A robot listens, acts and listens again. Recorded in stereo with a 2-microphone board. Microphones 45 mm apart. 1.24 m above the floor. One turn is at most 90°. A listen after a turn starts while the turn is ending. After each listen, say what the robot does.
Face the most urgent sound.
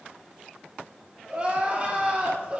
Turn 30° right.
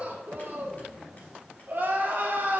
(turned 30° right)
Turn 90° right.
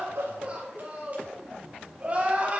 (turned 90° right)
Turn 35° right.
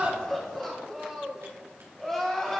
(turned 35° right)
Turn 10° left.
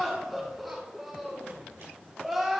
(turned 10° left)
Facing the crying, 1 to 2 m away.